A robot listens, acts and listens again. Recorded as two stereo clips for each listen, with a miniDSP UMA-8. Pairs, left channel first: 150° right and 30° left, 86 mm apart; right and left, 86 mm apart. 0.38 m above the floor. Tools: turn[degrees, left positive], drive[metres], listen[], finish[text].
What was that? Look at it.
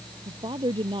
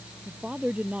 Thought: The woman speaking: 15° left.
Action: turn[15]
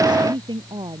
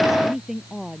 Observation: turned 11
Action: finish[Found it: a woman speaking, straight ahead.]